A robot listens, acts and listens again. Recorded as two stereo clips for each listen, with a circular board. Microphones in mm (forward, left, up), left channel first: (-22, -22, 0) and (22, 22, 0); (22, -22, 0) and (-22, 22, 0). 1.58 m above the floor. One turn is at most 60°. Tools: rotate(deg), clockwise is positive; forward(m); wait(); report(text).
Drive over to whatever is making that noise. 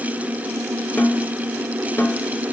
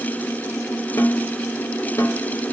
rotate(60)
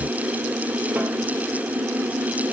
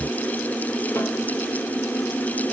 rotate(15)
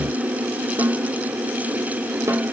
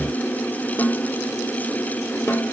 rotate(-10)
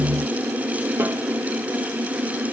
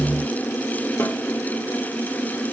wait()
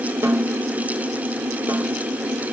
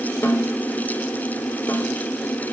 forward(1.0)
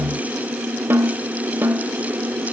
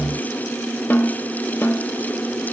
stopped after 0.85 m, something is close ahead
report("I am next to the snare drum.")